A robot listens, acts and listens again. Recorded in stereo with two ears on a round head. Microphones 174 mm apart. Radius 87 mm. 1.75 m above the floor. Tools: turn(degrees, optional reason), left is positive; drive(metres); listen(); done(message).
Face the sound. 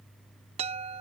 turn(degrees=-30, reason="The chime: about 30° right or 150° right.")
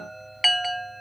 done("Found it: a chime, straight ahead.")